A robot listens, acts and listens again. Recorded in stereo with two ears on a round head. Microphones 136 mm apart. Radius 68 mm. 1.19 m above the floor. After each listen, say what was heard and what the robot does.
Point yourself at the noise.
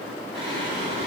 The singing: about 35° right or 145° right. Turn 35° right.
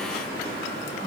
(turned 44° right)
So it is at 105° right. Turn 105° right.
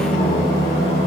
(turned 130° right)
The singing is now 20° left. Turn 20° left.
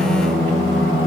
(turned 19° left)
Found it: singing, straight ahead.